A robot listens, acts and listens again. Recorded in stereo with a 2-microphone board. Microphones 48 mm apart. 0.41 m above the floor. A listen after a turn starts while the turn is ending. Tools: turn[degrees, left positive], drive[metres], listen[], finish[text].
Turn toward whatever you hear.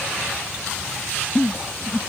Thought: The giggle: about 40° left or 140° left.
Action: turn[40]
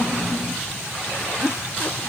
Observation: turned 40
Thought: So it is at 95° left.
Action: turn[95]
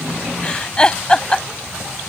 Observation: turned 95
Thought: The giggle is now 20° left.
Action: turn[20]
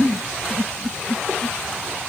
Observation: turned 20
Action: finish[Facing the giggle.]